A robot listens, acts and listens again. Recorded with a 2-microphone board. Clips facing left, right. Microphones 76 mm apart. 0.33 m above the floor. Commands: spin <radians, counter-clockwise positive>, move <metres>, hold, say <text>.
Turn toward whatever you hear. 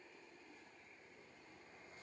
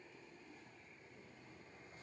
hold
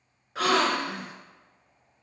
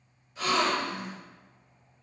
spin 1.57
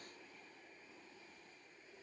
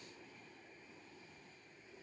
say Facing where the gasp came from. I can't hear it now.